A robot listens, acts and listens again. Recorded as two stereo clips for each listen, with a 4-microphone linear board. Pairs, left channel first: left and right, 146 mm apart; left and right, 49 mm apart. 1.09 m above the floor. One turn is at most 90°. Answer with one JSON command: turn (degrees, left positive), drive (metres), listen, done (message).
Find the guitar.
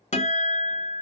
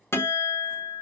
{"turn": 55}
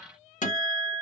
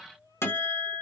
{"turn": 70}
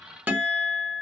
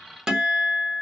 {"turn": -10}
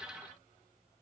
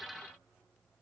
{"listen": true}
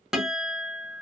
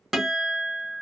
{"done": "Found it: a guitar, straight ahead, 1 to 2 m away."}